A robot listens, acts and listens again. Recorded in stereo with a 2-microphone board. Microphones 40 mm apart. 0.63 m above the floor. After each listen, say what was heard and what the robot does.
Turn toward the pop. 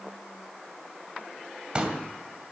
The pop: about 30° right or 150° right. Turn 30° right.
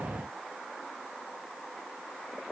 Keep listening.
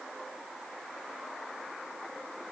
I heard a pop, but can't make it out now. It was about straight ahead or 120° right.